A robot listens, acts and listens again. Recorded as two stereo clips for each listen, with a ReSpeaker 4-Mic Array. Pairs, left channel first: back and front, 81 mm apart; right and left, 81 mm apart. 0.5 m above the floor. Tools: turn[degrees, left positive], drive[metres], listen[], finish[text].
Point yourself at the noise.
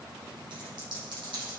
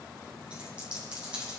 Thought: The dropped coin: 10° left.
Action: turn[10]
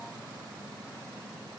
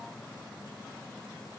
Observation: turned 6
Action: finish[I heard a dropped coin from this way, but can't make it out now.]